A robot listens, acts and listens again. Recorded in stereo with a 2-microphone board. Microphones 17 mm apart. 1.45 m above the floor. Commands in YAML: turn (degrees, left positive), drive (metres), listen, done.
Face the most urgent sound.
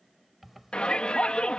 turn: 90
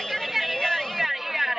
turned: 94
turn: -15
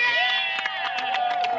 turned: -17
done: "Found it: a shout, straight ahead."